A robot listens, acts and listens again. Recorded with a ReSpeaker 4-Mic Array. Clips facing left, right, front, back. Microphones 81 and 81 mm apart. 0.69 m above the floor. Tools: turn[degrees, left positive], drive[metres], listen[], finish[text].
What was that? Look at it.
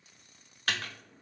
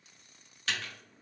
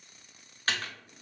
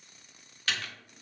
Thought: The typing on a keyboard: 50° left.
Action: turn[50]
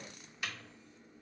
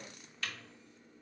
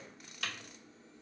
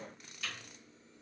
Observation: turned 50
Thought: The typing on a keyboard is now 15° left.
Action: turn[15]
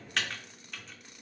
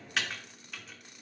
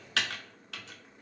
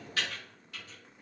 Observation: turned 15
Action: finish[Found it: typing on a keyboard, straight ahead.]